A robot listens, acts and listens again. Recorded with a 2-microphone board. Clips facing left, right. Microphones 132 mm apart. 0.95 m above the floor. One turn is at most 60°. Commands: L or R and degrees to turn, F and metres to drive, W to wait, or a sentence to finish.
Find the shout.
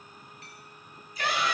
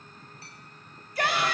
R60
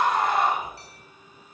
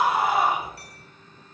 R10
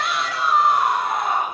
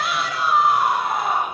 Found it: a shout, straight ahead, 2 to 4 m away.